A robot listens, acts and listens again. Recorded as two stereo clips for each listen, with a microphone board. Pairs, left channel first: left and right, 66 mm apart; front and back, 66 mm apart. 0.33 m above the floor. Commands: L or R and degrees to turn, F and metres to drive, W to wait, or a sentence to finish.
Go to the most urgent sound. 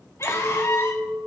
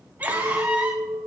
L120
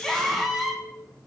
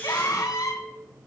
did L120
F1.0
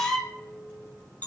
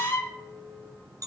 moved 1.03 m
L15
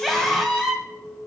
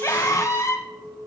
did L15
F1.0
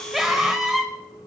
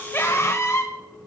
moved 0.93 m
R10
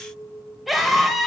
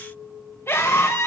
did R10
F1.0
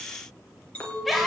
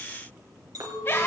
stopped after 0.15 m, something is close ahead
I am next to the scream.